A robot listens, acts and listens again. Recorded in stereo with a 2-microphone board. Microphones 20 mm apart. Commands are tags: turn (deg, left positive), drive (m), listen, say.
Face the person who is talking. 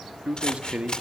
<turn deg="-90"/>
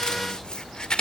<listen/>
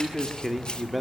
<say>Found it: a man speaking, straight ahead.</say>